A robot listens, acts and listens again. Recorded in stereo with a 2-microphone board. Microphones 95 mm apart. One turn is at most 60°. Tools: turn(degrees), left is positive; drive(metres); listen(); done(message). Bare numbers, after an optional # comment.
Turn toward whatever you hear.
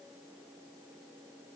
listen()
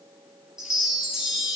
turn(-30)
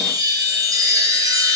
# So it is at 140° right.
turn(-60)
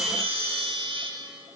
# The chime is now 80° right.
turn(-60)
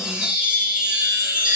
# The chime is now 10° right.
turn(-10)
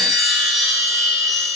done("Facing the chime, 1 to 2 m away.")